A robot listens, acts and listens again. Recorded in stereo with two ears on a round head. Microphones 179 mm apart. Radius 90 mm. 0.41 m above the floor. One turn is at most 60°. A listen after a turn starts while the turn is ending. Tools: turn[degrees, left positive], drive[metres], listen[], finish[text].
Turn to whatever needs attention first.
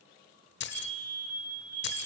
Action: turn[30]
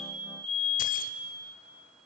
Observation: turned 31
Thought: So it is at 20° right.
Action: turn[-20]
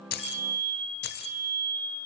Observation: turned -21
Action: finish[Found it: a fire alarm, straight ahead, over 4 m away.]